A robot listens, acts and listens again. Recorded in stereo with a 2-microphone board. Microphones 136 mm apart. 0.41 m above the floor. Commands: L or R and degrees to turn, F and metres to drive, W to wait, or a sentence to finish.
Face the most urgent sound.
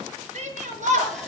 R65
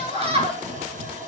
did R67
R45
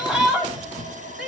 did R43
Facing the shout, over 4 m away.